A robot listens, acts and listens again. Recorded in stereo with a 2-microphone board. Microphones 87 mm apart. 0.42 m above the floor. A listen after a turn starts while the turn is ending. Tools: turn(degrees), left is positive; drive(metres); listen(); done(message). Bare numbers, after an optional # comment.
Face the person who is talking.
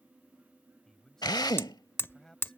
turn(30)
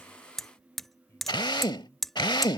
listen()
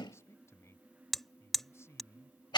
# So it is at 140° left.
turn(140)
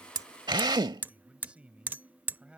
# The man speaking is now 15° right.
turn(-15)
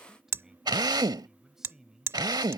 done("Found it: a man speaking, straight ahead.")